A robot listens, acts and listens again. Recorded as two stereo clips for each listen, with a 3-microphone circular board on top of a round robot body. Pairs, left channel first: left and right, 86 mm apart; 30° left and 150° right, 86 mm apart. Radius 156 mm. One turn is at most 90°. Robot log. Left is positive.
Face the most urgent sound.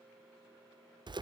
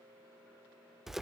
cmd idle
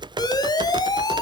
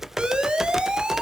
note: The siren: 130° left.
cmd yaw +90
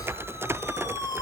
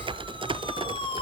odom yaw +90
note: The siren is now 45° left.
cmd yaw +45
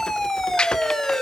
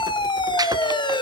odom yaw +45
end: Found it: a siren, straight ahead.